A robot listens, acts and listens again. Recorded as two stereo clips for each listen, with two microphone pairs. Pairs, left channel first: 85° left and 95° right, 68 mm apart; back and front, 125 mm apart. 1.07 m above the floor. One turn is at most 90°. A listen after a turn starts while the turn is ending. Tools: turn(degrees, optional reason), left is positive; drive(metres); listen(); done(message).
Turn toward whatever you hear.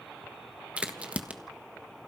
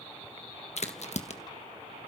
turn(degrees=-90, reason="The crack: 165° right.")
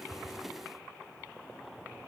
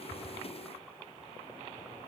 turn(degrees=-75, reason="Nothing new. It was at 75° right.")
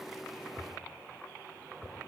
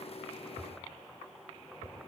done("I heard a crack from this way, but can't make it out now.")